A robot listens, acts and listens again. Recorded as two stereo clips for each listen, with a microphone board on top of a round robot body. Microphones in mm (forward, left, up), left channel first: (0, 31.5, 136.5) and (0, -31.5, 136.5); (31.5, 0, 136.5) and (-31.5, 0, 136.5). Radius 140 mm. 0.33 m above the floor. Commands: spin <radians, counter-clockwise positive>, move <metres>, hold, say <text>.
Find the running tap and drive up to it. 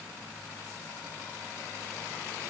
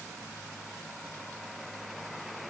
hold
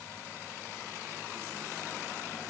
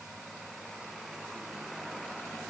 hold
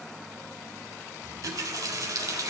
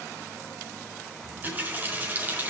spin -2.09
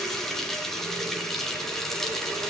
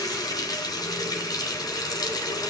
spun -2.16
move 1.0
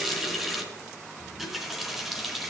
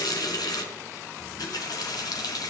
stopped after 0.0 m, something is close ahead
say Blocked. The running tap is further on, straight ahead.